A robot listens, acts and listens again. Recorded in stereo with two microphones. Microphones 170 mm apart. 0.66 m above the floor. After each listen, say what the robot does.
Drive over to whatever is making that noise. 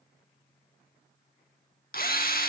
Turn 60° left.
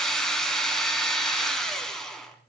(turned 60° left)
Drive 1.0 m forward.
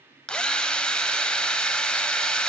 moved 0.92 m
Drive 1.0 m forward.
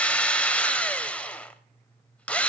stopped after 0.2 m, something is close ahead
Arrived at the drill, straight ahead.